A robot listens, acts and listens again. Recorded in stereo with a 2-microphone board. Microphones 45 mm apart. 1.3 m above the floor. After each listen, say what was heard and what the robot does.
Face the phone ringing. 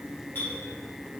Keep listening.
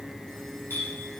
Keep listening.
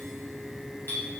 I can't make out a phone ringing to turn to.